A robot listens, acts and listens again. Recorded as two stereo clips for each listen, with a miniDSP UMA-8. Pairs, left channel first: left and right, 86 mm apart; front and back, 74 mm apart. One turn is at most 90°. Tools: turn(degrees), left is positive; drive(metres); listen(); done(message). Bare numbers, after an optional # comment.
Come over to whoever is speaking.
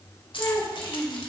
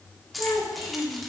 # The child speaking: 30° left.
turn(30)
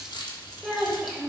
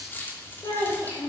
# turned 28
drive(1.0)
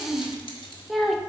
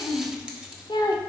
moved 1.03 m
drive(1.0)
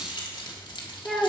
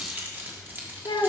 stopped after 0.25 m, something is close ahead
done("Arrived at the child speaking, straight ahead.")